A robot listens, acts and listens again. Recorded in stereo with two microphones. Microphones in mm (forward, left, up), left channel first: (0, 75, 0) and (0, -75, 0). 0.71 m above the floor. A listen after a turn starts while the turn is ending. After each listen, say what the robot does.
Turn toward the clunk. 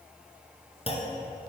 Turn 40° left.
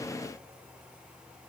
Keep listening.
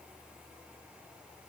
I heard a clunk, but can't make it out now. It was about straight ahead or 100° left.